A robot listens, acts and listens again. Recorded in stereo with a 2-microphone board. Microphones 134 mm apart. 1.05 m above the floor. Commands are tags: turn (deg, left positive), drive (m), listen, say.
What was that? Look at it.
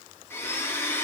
<turn deg="15"/>
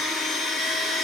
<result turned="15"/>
<say>Found it: a blender, straight ahead, 1 to 2 m away.</say>